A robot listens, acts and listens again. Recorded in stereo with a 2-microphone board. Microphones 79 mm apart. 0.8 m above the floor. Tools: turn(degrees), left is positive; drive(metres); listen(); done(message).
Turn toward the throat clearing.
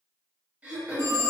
turn(degrees=-15)
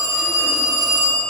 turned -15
listen()
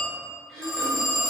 done("Facing the throat clearing.")